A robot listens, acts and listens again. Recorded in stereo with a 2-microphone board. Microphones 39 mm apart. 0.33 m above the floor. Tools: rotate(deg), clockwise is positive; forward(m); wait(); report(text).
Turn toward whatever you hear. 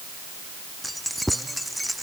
rotate(-30)
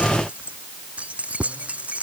rotate(35)
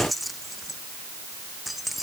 report("Found it: keys jangling, straight ahead.")